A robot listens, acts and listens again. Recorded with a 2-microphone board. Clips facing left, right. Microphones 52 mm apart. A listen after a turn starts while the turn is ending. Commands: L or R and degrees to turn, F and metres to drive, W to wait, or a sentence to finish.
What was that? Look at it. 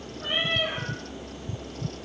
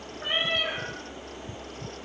R35
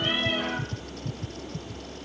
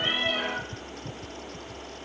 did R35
W
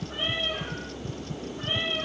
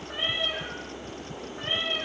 R110
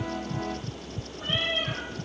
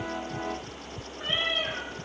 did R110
R55
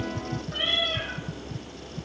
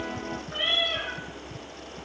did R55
R10
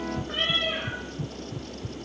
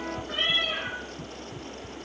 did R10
Found it: a cat meowing, straight ahead, 1 to 2 m away.